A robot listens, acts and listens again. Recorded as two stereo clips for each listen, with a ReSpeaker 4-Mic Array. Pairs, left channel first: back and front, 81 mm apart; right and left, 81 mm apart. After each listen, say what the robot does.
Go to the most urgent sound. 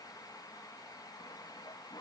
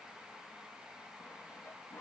Keep listening.
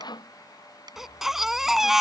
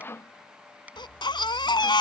Turn 85° right.
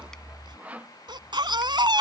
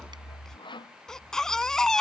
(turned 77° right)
Drive 1.0 m forward.
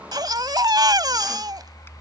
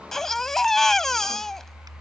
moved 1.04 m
Drive 1.0 m forward.
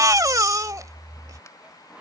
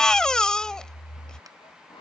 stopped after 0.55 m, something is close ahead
Turn 10° right.
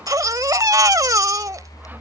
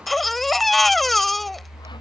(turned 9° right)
I am next to the baby crying.